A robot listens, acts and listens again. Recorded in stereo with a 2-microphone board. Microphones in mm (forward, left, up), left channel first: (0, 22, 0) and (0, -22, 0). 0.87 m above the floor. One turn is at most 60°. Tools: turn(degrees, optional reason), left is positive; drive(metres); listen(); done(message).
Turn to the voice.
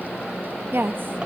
turn(degrees=-50, reason="The woman speaking: about 50° right or 130° right.")
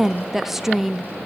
done("Facing the woman speaking.")